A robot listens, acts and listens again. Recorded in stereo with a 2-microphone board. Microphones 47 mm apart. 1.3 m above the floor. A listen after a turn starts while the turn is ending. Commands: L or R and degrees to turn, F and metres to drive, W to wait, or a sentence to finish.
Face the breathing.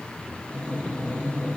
L25
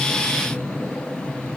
L125
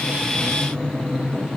R15
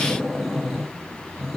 Found it: breathing, straight ahead, 2 to 4 m away.